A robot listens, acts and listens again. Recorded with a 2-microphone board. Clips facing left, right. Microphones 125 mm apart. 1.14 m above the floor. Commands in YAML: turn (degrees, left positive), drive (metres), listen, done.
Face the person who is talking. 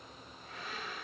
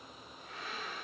listen: true
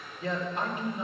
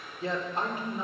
turn: -35
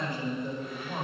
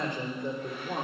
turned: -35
turn: -105
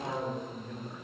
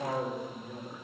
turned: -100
turn: -10
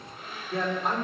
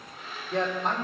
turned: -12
done: "Found it: a man speaking, straight ahead, 2 to 4 m away."